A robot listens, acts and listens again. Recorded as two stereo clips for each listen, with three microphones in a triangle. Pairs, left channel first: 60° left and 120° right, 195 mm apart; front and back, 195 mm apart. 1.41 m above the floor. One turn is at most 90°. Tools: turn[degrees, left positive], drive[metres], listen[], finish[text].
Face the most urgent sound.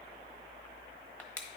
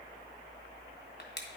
Action: listen[]
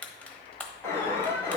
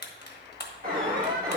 Thought: The alarm: 140° left.
Action: turn[90]
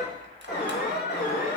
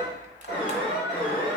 Thought: The alarm is now 30° left.
Action: turn[30]
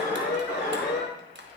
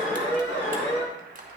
Thought: The alarm is now 25° left.
Action: turn[25]
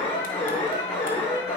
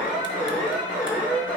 Action: finish[Found it: an alarm, straight ahead, 2 to 4 m away.]